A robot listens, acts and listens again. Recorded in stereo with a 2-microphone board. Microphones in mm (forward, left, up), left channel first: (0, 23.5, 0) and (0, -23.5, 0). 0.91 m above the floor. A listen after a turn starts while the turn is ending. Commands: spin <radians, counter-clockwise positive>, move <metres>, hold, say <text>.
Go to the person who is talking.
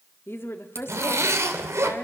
spin 1.05
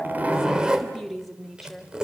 move 1.0
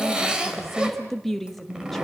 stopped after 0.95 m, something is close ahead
say Arrived at the woman speaking, straight ahead.